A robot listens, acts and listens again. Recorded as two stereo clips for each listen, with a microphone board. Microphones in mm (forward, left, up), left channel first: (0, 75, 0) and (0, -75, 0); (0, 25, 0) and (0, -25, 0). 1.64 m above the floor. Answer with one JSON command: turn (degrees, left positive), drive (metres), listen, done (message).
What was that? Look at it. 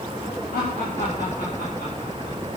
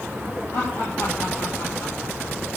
{"turn": 90}
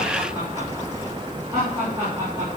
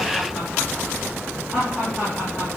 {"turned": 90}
{"turn": -20}
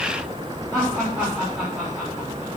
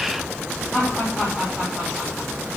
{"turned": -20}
{"done": "Found it: laughter, straight ahead."}